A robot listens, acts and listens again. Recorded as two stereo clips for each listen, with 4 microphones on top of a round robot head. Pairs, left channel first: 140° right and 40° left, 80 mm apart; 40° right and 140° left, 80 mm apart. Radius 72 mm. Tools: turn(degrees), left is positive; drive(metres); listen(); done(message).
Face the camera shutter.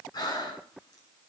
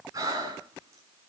listen()
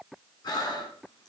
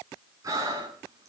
listen()
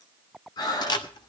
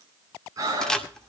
turn(degrees=-125)
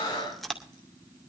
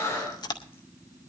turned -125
turn(degrees=-50)
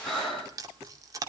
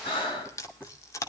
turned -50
done("Found it: a camera shutter, straight ahead, 2 to 4 m away.")